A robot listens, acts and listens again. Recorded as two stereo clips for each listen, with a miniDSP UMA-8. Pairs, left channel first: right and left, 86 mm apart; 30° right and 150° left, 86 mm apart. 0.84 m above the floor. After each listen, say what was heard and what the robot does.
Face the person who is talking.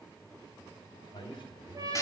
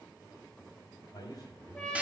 The man speaking: 70° right. Turn 70° right.
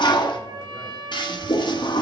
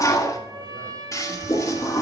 Keep listening.
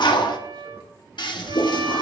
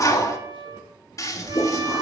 Keep listening.
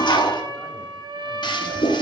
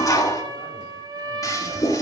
Facing where the man speaking came from. I can't hear it now.